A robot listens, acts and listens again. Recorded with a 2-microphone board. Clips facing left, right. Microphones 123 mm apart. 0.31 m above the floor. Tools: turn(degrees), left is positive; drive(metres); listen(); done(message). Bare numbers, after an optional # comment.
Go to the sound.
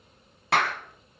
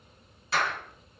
# The clap: about 65° left or 115° left.
turn(65)
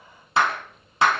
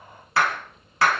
# So it is at 20° left.
turn(20)
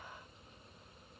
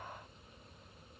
listen()
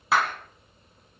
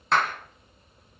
drive(1.0)
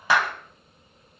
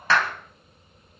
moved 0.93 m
# The clap is now 15° left.
turn(15)
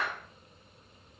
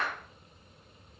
drive(1.0)
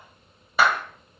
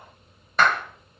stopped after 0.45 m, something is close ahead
# The clap is now 10° left.
turn(10)
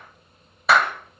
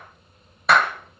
done("I am next to the clap.")